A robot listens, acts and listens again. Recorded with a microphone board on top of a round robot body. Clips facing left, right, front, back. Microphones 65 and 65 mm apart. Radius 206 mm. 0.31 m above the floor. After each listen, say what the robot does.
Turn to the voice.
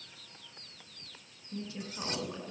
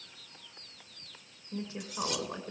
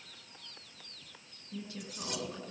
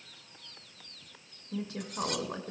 Turn 155° right.
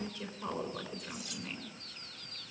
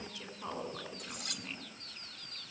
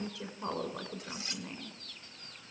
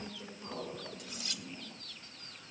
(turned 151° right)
Facing the woman speaking, over 4 m away.